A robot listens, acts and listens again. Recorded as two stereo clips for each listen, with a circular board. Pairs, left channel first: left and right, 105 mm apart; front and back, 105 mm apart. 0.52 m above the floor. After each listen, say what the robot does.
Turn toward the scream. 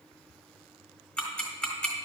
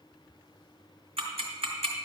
Keep listening.
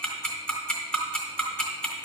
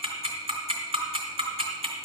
Keep listening.
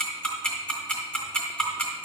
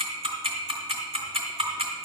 I can't make out a scream to turn to.